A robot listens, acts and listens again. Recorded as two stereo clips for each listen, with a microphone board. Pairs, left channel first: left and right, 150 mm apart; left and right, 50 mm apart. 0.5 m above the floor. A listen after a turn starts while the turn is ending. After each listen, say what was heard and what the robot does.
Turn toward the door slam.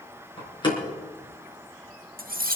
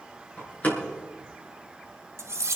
The door slam: about 30° left or 150° left. Turn 30° left.
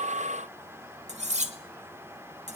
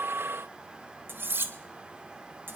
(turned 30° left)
Keep listening.
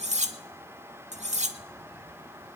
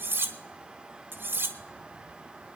I heard a door slam, but can't make it out now. It was about straight ahead or 120° left.